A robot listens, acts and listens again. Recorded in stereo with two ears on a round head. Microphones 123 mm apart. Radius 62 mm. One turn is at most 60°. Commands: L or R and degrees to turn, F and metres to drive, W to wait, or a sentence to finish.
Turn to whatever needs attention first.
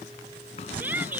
R30
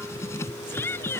L15
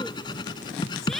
Facing the shout.